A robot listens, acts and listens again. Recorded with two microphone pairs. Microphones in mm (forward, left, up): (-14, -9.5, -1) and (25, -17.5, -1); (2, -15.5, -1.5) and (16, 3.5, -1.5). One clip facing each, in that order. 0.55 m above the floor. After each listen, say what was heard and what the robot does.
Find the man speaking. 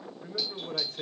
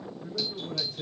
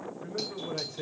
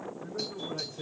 The man speaking: 160° right. Turn 160° right.
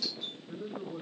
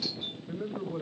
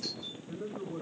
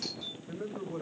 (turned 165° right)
Facing the man speaking, 2 to 4 m away.